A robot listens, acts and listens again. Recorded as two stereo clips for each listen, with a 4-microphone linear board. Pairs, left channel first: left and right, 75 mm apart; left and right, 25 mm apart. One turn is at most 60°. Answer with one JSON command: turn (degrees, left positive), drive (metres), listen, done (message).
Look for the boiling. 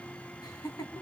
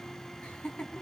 {"listen": true}
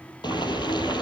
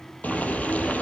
{"turn": 60}
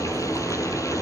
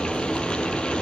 {"turn": 45}
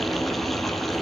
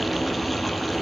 {"done": "Facing the boiling."}